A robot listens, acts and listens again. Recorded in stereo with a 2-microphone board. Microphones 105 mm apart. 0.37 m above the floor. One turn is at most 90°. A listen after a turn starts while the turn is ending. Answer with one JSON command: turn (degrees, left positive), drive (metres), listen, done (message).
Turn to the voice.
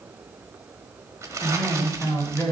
{"turn": 20}
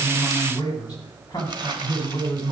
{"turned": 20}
{"turn": 90}
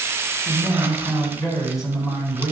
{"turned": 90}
{"turn": 40}
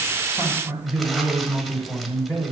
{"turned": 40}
{"turn": 15}
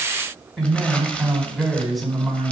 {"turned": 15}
{"done": "Found it: a man speaking, straight ahead, 2 to 4 m away."}